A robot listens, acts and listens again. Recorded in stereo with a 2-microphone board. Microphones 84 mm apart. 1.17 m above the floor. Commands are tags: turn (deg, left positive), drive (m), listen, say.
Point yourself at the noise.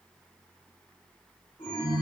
<turn deg="70"/>
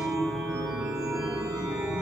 <say>Facing the chime.</say>